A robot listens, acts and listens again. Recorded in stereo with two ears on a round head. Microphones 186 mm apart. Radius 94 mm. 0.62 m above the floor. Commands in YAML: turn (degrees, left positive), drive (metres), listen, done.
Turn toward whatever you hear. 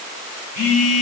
turn: 50
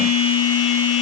turn: 85
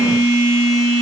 turn: 15
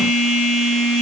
done: "Facing the phone buzzing."